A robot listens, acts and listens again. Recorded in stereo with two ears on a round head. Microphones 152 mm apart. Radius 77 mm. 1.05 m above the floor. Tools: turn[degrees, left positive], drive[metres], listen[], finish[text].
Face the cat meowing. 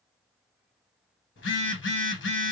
Action: listen[]
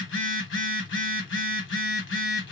Action: listen[]
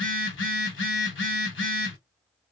Action: finish[I can't make out a cat meowing, only a phone buzzing.]